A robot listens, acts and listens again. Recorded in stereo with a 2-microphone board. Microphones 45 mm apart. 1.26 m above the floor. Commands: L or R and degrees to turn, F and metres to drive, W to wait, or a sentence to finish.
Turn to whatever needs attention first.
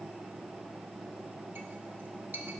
W
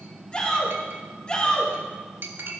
L25
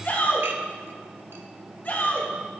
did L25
L130
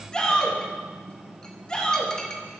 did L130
L20
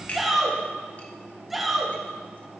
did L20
Found it: a shout, straight ahead, 2 to 4 m away.